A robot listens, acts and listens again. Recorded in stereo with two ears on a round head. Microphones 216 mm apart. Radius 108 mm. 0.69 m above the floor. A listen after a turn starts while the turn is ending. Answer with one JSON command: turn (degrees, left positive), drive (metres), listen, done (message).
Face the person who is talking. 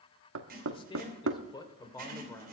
{"turn": 30}
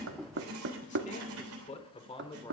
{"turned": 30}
{"turn": 20}
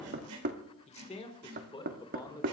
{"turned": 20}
{"turn": 15}
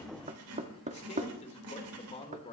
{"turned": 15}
{"turn": 30}
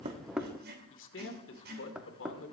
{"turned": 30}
{"turn": 125}
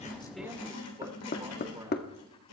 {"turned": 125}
{"turn": -15}
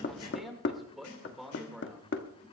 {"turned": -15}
{"done": "Found it: a man speaking, straight ahead."}